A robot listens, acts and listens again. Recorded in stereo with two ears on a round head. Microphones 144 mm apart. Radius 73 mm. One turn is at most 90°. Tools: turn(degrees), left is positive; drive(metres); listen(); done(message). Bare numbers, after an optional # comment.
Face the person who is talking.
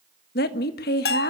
# The woman speaking: about 70° left or 110° left.
turn(70)
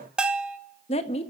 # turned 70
# So it is at 40° left.
turn(40)
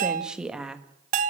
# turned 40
done("Facing the woman speaking.")